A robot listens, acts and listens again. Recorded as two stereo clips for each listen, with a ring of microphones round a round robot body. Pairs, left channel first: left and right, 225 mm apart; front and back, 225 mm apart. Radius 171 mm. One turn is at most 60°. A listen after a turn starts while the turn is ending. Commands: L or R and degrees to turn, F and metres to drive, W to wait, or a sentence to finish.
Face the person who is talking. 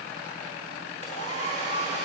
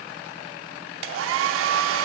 W
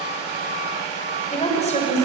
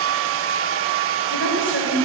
L30
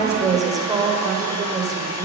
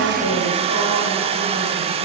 R15
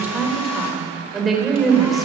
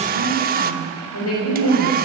Facing the woman speaking.